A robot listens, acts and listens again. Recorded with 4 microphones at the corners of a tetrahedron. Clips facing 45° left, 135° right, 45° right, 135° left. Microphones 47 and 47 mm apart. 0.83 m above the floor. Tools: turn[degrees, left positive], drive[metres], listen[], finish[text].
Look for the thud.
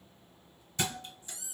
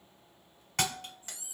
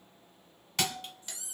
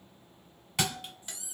Thought: The thud: 140° right.
Action: turn[-140]
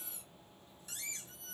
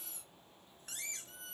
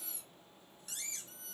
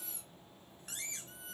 Action: finish[Facing where the thud came from. I can't hear it now.]